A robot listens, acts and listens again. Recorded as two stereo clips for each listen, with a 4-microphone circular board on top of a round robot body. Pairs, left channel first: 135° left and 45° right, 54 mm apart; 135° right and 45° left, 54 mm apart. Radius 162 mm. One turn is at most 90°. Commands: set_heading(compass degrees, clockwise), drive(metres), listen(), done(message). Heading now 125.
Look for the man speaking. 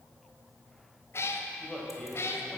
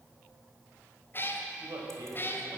set_heading(65)
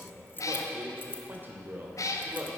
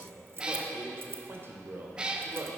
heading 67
done("Found it: a man speaking, straight ahead, 2 to 4 m away.")